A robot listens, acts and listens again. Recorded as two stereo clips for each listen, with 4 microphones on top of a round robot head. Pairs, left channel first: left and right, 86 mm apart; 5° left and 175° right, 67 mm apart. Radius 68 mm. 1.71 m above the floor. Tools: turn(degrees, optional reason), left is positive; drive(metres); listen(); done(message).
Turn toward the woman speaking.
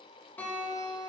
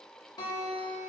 listen()
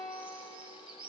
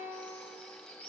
listen()
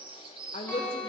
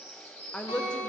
turn(degrees=80, reason="The woman speaking: 80° left.")
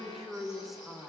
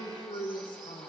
done("Facing the woman speaking.")